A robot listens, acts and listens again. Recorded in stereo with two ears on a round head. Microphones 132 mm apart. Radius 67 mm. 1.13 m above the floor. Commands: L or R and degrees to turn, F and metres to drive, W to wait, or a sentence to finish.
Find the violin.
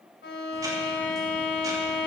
L90
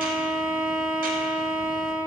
Found it: a violin, straight ahead.